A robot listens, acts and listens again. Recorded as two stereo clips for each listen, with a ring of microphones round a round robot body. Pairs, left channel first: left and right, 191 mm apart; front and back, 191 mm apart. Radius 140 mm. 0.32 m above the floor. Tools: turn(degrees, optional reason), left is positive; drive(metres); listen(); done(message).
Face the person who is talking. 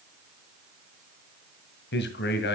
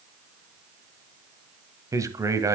turn(degrees=110, reason="The man speaking: 110° left.")
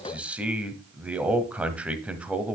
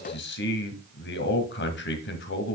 done("Found it: a man speaking, straight ahead, 1 to 2 m away.")